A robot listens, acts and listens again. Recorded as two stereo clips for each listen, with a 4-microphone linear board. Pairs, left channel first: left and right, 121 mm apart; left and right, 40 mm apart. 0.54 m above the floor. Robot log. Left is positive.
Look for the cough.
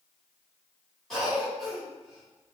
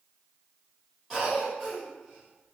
cmd yaw +30
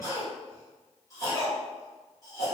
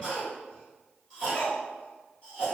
note: So it is at 150° left.
cmd yaw +150
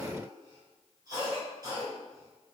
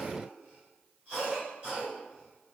note: The cough is now 35° right.
cmd yaw -35
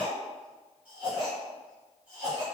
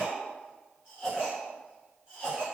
note: The cough is now 15° right.
cmd yaw -15
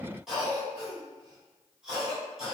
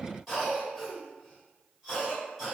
end: Found it: a cough, straight ahead, 1 to 2 m away.